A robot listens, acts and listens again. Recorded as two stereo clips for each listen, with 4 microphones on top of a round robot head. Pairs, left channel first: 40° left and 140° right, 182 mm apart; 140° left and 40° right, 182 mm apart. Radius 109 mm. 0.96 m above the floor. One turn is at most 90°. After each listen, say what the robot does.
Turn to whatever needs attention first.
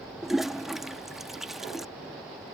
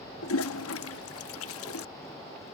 Keep listening.
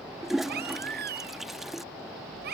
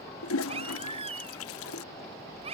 Turn 90° right.
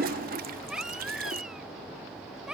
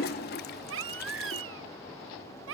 Turn 55° right.
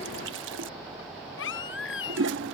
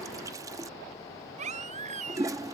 Turn 15° left.
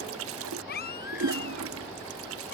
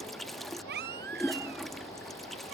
Facing the baby crying.